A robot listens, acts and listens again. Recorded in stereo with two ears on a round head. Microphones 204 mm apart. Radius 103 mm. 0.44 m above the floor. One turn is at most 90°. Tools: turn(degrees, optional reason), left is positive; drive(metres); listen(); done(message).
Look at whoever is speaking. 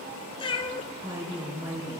turn(degrees=-30)
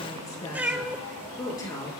turn(degrees=15, reason="So it is at 15° left.")
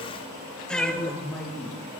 done("Found it: a woman speaking, straight ahead, over 4 m away.")